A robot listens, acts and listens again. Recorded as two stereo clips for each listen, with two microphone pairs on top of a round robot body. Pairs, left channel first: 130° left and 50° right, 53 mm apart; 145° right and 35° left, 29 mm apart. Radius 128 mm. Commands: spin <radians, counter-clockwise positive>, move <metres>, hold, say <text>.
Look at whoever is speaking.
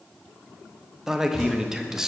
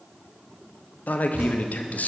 spin -2.27
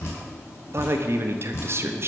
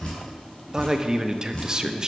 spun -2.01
spin -0.35
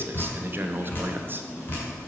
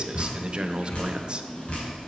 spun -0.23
say Facing the man speaking, under 1 m away.